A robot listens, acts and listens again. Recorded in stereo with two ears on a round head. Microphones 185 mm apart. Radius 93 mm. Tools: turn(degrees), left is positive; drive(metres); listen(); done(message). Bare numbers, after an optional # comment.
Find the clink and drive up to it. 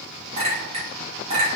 # The clink: about 30° right or 150° right.
turn(-30)
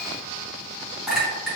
drive(1.0)
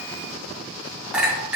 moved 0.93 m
drive(1.0)
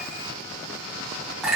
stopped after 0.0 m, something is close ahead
done("I am next to the clink.")